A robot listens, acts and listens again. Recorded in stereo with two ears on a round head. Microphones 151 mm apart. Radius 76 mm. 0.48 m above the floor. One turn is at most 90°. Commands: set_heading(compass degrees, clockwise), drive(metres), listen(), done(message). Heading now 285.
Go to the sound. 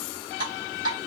set_heading(310)
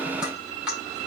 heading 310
drive(1.0)
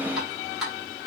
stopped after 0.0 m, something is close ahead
done("Something is in my way. I am facing the dripping but have not reached it.")